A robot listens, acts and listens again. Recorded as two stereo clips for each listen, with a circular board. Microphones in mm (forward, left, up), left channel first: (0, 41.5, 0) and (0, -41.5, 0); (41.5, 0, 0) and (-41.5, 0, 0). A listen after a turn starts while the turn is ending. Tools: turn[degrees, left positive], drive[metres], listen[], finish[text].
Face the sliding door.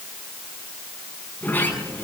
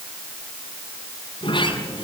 Thought: The sliding door: 20° left.
Action: turn[20]
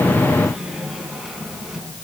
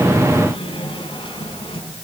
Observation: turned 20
Action: finish[Facing the sliding door, over 4 m away.]